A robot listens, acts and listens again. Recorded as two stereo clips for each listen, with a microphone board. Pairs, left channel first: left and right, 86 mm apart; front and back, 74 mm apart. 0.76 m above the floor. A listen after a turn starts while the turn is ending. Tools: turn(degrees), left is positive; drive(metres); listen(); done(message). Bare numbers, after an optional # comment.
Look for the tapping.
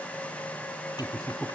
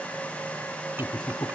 listen()
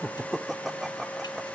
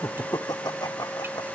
listen()
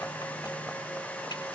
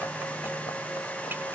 done("I can't make out tapping to turn to.")